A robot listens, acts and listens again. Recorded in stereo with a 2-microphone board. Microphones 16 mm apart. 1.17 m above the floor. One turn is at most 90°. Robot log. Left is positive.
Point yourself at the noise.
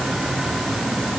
cmd idle
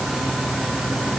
cmd idle
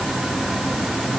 end: I can't make out anything.